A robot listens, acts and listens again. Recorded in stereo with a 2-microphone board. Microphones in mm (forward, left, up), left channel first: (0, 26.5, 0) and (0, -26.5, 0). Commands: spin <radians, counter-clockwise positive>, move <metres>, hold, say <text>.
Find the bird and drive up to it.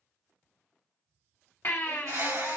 spin -1.57
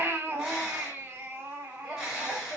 move 1.0
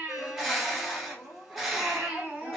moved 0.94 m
move 1.0
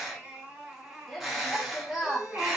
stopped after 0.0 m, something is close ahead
say Arrived at the bird, straight ahead.